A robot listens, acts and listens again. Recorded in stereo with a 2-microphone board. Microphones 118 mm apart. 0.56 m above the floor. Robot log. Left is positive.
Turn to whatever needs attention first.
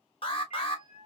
note: The alarm: about 50° left or 130° left.
cmd yaw +50
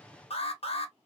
note: So it is at 75° left.
cmd yaw +75
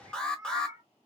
note: The alarm is now 10° left.
cmd yaw +10
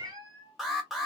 end: Facing the alarm.